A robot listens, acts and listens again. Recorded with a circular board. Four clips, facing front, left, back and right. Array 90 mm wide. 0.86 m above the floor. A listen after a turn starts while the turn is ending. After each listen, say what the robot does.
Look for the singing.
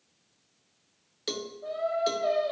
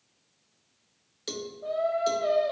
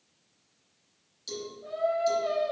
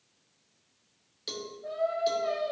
Turn 75° left.
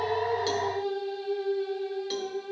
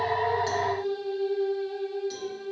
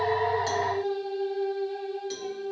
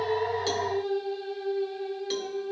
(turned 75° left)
Facing the singing.